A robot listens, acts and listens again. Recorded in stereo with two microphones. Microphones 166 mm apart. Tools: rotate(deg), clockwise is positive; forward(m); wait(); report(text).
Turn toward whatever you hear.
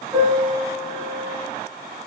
rotate(30)
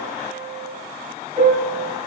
rotate(135)
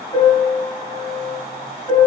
rotate(-20)
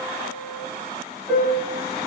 report("Found it: a piano, straight ahead.")